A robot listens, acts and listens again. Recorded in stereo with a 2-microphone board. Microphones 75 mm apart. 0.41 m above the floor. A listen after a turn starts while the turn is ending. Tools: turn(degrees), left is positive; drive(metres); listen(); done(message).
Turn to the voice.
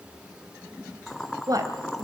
turn(degrees=-55)
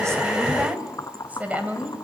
turn(degrees=-25)
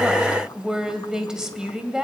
turn(degrees=-10)
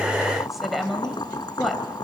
done("Facing the woman speaking.")